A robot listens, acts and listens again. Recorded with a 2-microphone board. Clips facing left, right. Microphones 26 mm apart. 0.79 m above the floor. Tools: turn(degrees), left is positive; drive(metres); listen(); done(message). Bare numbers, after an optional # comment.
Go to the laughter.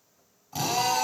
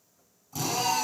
listen()
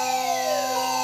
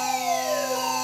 listen()
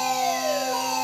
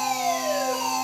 done("I can't make out laughter, only a fire alarm and a drill.")